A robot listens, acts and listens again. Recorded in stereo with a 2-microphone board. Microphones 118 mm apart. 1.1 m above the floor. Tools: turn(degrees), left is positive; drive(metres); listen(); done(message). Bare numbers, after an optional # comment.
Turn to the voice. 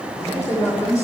# The man speaking: about 25° left or 155° left.
turn(25)
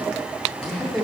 done("Found it: a man speaking, straight ahead, 2 to 4 m away.")